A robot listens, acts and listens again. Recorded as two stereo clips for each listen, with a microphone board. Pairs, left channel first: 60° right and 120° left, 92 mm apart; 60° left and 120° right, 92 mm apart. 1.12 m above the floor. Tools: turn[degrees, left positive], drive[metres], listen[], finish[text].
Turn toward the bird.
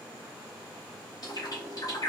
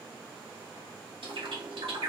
Thought: The bird: 100° right.
Action: turn[-100]
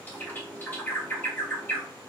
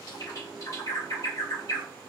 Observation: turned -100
Thought: The bird is now 10° left.
Action: turn[10]
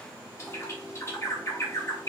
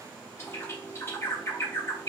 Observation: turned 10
Action: finish[Facing the bird, 1 to 2 m away.]